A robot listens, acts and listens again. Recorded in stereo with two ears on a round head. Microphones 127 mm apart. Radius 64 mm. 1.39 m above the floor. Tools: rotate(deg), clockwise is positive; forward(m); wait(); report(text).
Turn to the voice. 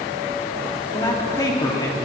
rotate(-25)
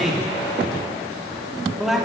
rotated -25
report("Found it: a man speaking, straight ahead.")